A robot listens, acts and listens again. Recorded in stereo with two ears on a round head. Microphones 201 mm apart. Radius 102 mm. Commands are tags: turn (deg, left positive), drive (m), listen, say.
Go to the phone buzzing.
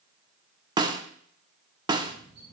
<turn deg="-55"/>
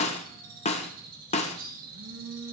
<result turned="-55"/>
<turn deg="-70"/>
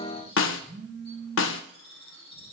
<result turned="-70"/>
<drive m="1.0"/>
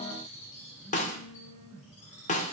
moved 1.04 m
<turn deg="-10"/>
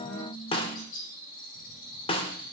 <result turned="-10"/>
<drive m="1.0"/>
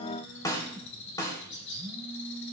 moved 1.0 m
<drive m="1.0"/>
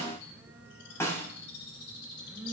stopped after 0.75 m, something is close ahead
<say>Arrived at the phone buzzing, straight ahead.</say>